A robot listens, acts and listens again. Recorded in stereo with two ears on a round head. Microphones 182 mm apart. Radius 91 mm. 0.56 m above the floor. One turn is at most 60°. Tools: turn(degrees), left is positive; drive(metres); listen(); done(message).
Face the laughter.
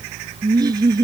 turn(degrees=-20)
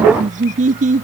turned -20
turn(degrees=-60)
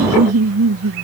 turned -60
turn(degrees=-60)
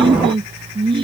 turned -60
turn(degrees=-25)
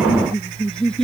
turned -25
done("Found it: laughter, straight ahead.")